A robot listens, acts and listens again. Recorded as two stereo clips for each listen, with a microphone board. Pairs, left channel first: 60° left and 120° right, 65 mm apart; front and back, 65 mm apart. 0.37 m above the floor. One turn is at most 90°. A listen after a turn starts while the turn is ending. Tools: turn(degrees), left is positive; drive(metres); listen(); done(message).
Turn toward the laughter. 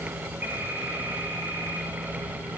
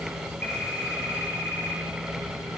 listen()
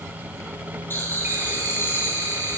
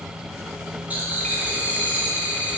turn(degrees=90)
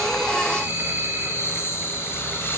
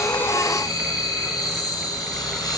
done("Found it: laughter, straight ahead.")